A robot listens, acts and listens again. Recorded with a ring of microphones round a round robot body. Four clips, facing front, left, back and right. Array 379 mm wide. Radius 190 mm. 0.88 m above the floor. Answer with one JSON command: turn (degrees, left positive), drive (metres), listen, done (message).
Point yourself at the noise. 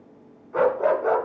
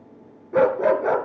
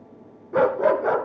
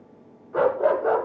{"turn": 130}
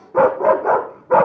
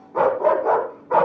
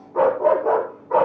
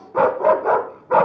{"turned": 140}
{"turn": -10}
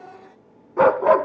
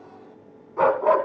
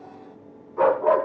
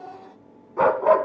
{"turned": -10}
{"done": "Found it: a dog barking, straight ahead, 2 to 4 m away."}